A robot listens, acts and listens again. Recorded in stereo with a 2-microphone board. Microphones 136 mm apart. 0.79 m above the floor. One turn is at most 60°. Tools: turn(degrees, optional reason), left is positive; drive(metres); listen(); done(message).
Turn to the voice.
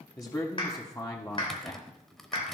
turn(degrees=25, reason="The man speaking: about 25° left or 155° left.")
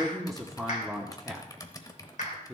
done("Found it: a man speaking, straight ahead, 1 to 2 m away.")